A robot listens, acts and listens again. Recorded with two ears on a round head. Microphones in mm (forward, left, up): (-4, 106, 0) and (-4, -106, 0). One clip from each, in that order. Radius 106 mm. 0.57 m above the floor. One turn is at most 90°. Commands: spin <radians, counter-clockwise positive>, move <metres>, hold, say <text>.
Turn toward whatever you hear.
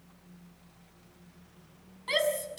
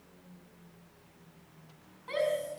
spin 1.57
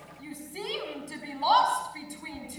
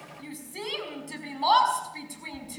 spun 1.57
spin -0.17
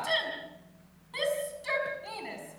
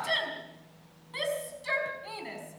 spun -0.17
say Found it: a shout, straight ahead, over 4 m away.